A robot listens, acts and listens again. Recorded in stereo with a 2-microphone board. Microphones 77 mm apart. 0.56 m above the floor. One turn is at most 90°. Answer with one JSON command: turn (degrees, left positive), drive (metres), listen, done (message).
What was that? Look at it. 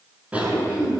{"turn": -15}
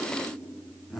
{"done": "Facing the cough."}